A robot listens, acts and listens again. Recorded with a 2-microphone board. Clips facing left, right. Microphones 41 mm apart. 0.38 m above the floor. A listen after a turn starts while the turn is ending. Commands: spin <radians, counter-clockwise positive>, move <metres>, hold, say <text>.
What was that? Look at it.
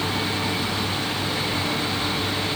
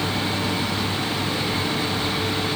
hold
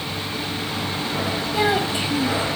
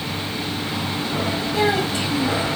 spin 0.35
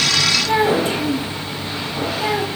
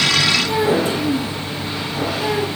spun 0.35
spin 2.01
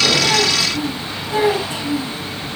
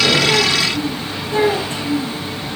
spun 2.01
spin 0.35
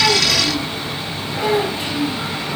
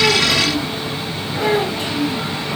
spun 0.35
say Facing the child speaking.